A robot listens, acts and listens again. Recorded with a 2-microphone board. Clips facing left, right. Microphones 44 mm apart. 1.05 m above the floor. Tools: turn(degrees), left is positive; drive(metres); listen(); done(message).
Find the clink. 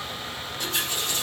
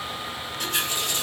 listen()
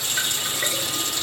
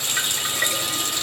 listen()
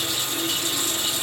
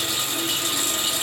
done("I can't make out a clink, only a running tap.")